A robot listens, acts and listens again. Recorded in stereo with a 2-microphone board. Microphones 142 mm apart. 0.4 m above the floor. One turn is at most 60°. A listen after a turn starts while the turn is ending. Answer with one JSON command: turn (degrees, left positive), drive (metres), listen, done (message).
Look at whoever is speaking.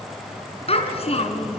{"turn": 50}
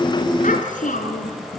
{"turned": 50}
{"turn": 60}
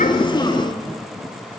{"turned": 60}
{"turn": 15}
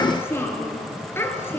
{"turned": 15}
{"turn": 15}
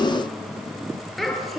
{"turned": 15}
{"done": "Found it: a child speaking, straight ahead, over 4 m away."}